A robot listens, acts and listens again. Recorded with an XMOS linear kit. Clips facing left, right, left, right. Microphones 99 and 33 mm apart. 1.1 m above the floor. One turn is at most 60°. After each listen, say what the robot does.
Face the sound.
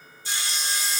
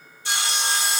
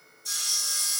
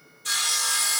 Turn 60° right.
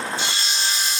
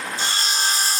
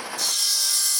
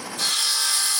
Turn 45° right.
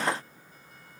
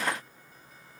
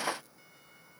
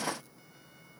Keep listening.
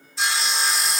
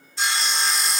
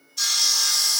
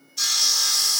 Facing the sawing, 1 to 2 m away.